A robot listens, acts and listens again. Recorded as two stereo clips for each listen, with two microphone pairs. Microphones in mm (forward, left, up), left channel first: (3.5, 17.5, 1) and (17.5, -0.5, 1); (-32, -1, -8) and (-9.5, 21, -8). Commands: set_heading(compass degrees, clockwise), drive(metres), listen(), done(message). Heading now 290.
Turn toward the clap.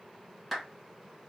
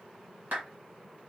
set_heading(250)
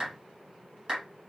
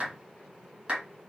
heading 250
done("Facing the clap.")